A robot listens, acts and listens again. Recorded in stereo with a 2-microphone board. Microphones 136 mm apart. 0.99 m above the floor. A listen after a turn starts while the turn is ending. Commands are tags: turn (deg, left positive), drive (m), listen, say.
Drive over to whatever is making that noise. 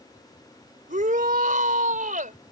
<turn deg="-70"/>
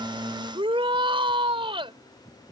<turn deg="-40"/>
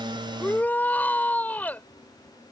<turn deg="10"/>
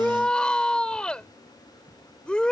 <drive m="1.0"/>
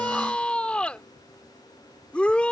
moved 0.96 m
<turn deg="10"/>
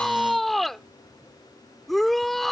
<drive m="1.0"/>
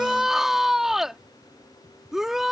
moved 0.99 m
<drive m="1.0"/>
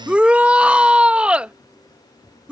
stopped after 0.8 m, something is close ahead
<turn deg="-10"/>
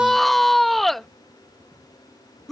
<say>I am next to the shout.</say>